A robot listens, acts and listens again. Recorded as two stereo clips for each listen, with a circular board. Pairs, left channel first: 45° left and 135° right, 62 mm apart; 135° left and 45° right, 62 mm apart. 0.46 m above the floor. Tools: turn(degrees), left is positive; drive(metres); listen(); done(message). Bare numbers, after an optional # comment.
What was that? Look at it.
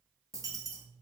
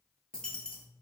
# The dropped coin: 150° right.
turn(-150)
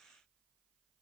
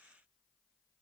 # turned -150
done("Facing where the dropped coin came from. I can't hear it now.")